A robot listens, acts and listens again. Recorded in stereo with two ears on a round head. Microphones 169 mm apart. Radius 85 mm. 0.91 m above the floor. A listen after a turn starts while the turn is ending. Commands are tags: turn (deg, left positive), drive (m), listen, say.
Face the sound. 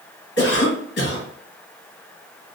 <turn deg="60"/>
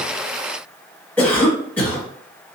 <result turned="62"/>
<turn deg="10"/>
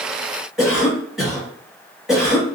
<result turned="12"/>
<say>Found it: a cough, straight ahead, 1 to 2 m away.</say>